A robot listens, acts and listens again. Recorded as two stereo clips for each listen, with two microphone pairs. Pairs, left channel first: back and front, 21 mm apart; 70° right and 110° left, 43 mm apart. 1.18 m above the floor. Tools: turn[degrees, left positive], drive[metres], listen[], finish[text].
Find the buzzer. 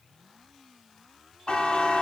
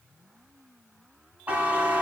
Thought: The buzzer: 170° left.
Action: turn[170]
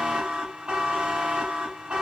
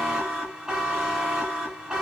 Thought: The buzzer is now 40° left.
Action: turn[40]
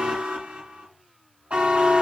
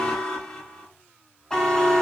Thought: The buzzer is now 10° left.
Action: turn[10]
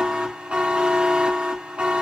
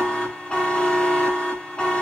Action: finish[Facing the buzzer.]